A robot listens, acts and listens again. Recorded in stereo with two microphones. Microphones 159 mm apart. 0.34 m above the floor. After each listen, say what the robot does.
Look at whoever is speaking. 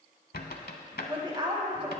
Turn 30° right.
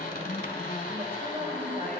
Keep listening.
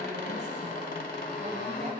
Keep listening.
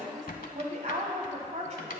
Turn 115° right.
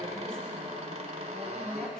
Keep listening.
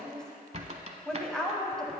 Facing the woman speaking, 1 to 2 m away.